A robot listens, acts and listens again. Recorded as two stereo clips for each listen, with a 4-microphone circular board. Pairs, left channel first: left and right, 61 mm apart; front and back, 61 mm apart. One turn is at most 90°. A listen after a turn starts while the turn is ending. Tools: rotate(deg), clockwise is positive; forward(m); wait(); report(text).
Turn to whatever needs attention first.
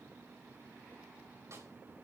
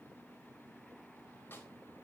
wait()
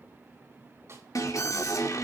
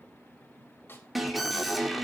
rotate(-90)
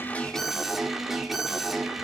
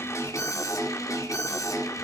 report("Found it: an alarm, straight ahead.")